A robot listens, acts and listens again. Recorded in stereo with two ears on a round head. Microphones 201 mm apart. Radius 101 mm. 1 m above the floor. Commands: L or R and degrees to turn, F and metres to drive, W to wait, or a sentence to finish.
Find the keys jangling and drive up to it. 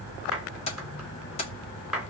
L30
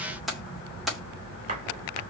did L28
F1.0
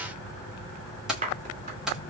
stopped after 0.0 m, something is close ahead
Blocked. The keys jangling is further on, straight ahead.